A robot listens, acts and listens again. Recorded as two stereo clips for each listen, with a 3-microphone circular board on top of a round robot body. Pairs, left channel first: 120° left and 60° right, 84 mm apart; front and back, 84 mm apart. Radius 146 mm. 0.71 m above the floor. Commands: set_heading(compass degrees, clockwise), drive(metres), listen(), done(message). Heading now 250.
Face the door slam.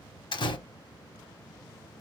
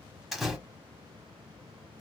set_heading(160)
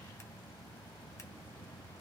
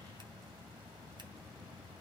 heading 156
done("Facing where the door slam came from. I can't hear it now.")